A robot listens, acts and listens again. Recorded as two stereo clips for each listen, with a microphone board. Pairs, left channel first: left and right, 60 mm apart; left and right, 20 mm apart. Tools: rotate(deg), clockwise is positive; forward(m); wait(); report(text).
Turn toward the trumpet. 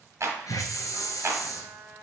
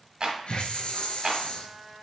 rotate(65)
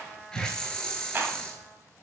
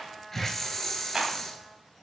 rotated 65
report("Found it: a trumpet, straight ahead, under 1 m away.")